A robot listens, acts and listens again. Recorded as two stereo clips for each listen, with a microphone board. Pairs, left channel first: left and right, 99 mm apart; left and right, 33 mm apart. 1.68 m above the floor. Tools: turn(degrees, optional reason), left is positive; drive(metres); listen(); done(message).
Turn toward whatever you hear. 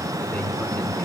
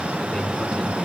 turn(degrees=30)
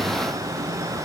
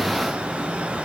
listen()
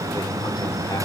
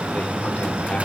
turn(degrees=140, reason="So it is at 140° left.")
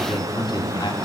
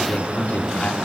turn(degrees=55, reason="The man speaking is now 55° left.")
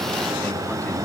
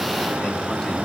turn(degrees=20, reason="The man speaking is now 20° left.")
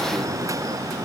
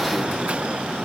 listen()
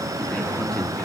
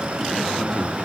turn(degrees=10, reason="The man speaking is now 10° left.")
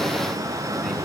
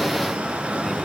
listen()
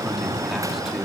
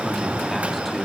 done("Facing the man speaking, over 4 m away.")